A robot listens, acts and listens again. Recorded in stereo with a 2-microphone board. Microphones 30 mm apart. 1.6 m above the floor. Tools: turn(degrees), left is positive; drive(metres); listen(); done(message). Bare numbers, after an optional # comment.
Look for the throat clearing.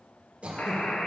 # The throat clearing: about 40° right or 140° right.
turn(-40)
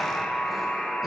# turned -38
listen()
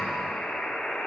listen()
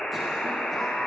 done("I heard throat clearing, but can't make it out now. It was about straight ahead or 105° right.")